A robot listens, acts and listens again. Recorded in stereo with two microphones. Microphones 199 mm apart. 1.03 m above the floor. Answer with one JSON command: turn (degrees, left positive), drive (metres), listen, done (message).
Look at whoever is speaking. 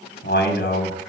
{"turn": 70}
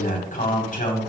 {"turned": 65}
{"turn": 45}
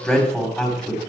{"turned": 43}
{"done": "Facing the man speaking."}